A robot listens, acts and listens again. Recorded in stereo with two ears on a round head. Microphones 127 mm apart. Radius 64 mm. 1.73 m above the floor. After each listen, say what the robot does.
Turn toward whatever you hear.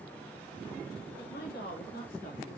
Turn 75° left.
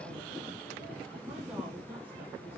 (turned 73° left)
Turn 10° right.
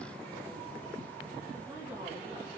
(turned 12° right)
Keep listening.
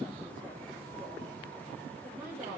Turn 10° right.
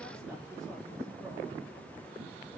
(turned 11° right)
Keep listening.
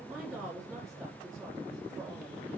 Facing the woman speaking, over 4 m away.